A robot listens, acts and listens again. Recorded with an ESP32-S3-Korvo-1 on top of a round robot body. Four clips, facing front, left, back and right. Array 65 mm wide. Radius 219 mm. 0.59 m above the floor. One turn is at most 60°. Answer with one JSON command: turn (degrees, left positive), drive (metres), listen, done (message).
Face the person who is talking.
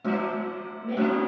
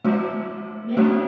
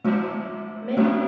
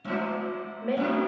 {"turn": -60}
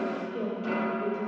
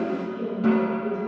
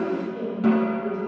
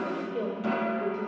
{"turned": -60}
{"turn": -60}
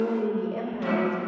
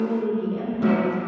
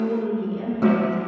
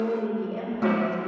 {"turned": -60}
{"turn": -20}
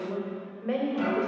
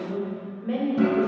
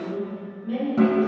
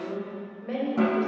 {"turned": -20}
{"turn": -10}
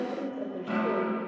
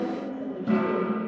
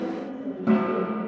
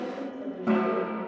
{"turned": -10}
{"done": "Found it: a woman speaking, straight ahead, 2 to 4 m away."}